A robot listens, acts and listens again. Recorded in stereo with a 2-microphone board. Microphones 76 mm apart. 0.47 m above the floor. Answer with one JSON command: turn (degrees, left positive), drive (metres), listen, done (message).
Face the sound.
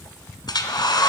{"turn": 70}
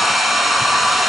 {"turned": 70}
{"done": "Found it: a hair dryer, straight ahead, 1 to 2 m away."}